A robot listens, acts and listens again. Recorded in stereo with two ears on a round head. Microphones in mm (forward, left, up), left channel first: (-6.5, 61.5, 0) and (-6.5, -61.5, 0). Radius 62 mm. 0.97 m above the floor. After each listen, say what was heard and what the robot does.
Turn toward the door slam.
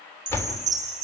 The door slam: about 20° left or 160° left. Turn 20° left.
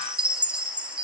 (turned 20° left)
Keep listening.
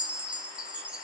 I heard a door slam, but can't make it out now. It was about straight ahead or 140° left.